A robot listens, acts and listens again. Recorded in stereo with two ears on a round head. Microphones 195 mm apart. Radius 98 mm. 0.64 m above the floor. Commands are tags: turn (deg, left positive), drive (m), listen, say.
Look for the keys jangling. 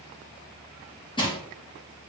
<listen/>
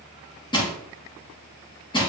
<listen/>
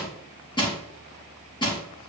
<say>I can't make out keys jangling to turn to.</say>